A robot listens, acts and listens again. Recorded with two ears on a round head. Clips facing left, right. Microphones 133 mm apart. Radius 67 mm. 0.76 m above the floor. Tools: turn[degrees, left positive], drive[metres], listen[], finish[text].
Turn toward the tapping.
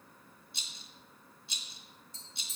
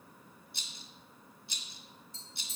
Thought: The tapping: about 50° left or 130° left.
Action: turn[50]
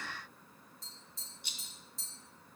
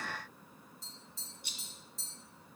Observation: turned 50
Action: finish[Facing the tapping, 2 to 4 m away.]